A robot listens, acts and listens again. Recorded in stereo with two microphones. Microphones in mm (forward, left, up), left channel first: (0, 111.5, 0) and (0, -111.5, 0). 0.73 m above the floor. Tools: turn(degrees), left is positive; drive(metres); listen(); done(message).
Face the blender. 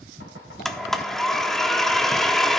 turn(degrees=30)
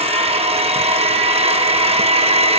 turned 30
turn(degrees=-30)
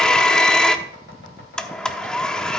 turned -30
done("Found it: a blender, straight ahead.")